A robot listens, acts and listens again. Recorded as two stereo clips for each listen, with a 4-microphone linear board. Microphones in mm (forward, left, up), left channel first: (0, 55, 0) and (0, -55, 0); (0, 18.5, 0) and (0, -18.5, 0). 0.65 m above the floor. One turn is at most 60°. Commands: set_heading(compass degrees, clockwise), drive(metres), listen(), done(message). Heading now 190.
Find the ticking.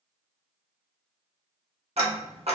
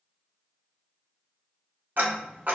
set_heading(250)
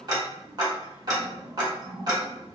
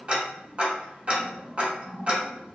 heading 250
set_heading(290)
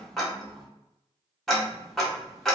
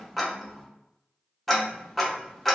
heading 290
done("Facing the ticking.")